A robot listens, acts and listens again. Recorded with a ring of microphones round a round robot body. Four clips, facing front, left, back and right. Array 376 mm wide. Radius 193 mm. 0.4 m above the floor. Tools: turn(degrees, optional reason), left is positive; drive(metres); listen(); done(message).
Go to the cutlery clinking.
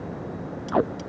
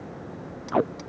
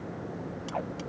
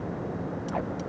turn(degrees=120, reason="The cutlery clinking: 120° left.")
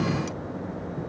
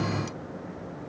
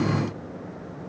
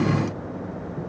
listen()
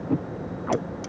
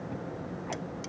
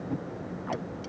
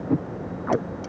listen()
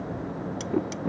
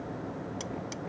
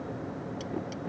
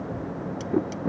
turn(degrees=20, reason="The cutlery clinking is now 20° left.")
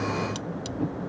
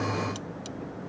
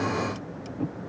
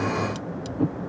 drive(metres=1.0)
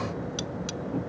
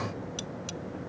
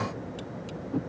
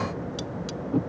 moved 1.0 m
drive(metres=1.0)
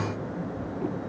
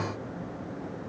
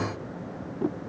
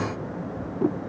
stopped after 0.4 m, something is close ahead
listen()
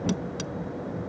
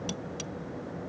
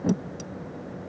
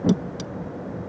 turn(degrees=-10, reason="The cutlery clinking is now 10° right.")
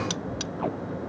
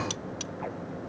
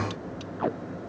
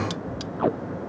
done("I am next to the cutlery clinking.")